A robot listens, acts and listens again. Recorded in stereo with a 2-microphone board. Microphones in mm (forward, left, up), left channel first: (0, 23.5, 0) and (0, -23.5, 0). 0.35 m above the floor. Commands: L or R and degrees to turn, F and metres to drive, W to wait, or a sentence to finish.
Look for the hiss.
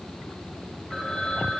W
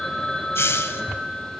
L65
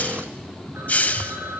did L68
L35
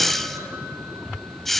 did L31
Found it: a hiss, straight ahead.